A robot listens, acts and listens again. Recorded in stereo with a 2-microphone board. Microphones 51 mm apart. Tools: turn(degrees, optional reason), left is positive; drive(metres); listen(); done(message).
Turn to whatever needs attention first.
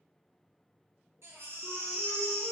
turn(degrees=-55, reason="The baby crying: about 55° right or 125° right.")
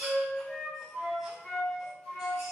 turn(degrees=-10, reason="So it is at 10° right.")
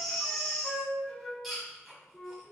done("Found it: a baby crying, straight ahead, under 1 m away.")